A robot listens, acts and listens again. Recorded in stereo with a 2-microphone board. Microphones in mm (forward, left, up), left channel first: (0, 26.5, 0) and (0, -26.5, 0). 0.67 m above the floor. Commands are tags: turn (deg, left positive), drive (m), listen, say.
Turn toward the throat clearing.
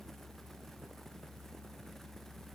<listen/>
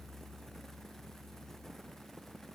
<listen/>
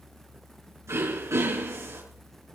<turn deg="-65"/>
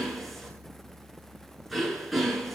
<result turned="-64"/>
<say>Found it: throat clearing, straight ahead.</say>